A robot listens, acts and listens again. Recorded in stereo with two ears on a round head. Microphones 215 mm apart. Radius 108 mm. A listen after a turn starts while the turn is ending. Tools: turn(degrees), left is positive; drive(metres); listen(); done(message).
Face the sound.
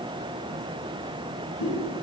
turn(degrees=65)
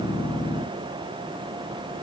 listen()
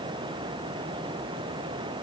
done("I heard a pop, but can't make it out now. It was about straight ahead or 50° left.")